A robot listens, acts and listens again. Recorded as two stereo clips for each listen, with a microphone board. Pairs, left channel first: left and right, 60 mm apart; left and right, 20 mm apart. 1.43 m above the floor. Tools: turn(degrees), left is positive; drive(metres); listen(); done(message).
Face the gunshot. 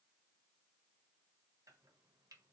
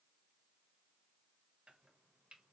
listen()
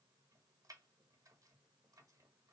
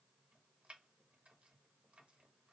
listen()
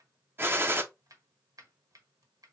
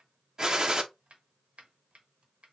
turn(degrees=-40)
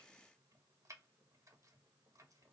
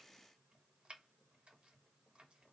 listen()
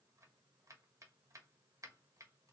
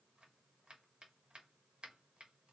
done("I heard a gunshot, but can't make it out now. It was about straight ahead or 100° right.")